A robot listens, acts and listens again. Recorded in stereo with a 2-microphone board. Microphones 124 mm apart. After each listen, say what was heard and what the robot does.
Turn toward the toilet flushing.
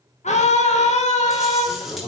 The toilet flushing: about 35° left or 145° left. Turn 35° left.
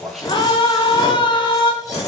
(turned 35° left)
Found it: a toilet flushing, straight ahead, over 4 m away.